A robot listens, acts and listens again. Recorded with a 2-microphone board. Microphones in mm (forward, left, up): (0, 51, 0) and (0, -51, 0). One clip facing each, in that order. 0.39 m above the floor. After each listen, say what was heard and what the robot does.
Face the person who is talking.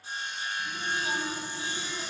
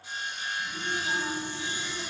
The child speaking: about 75° left or 105° left. Turn 75° left.
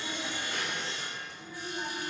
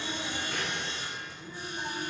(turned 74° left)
Facing the child speaking.